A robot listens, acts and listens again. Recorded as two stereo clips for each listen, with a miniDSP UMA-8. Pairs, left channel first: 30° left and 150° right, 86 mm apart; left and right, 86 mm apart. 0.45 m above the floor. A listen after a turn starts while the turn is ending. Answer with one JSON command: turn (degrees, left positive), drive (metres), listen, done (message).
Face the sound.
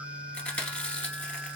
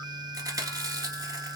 {"turn": -45}
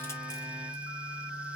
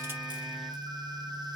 {"listen": true}
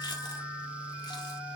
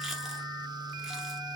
{"listen": true}
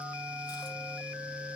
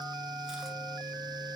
{"done": "Facing where the chewing came from. I can't hear it now."}